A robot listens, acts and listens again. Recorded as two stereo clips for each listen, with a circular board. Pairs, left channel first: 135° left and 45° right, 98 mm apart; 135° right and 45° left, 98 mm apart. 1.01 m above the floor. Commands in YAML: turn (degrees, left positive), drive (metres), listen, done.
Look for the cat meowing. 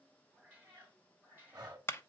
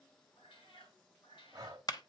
turn: -115
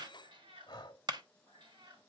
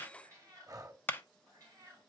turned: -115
done: "Found it: a cat meowing, straight ahead, over 4 m away."